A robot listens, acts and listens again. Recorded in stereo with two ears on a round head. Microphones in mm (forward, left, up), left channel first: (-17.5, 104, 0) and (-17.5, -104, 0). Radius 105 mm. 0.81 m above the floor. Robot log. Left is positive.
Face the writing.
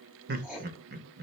cmd yaw -30
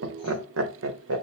cmd idle
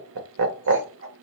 cmd idle
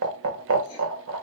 end: I heard writing, but can't make it out now. It was about 25° left or 145° right.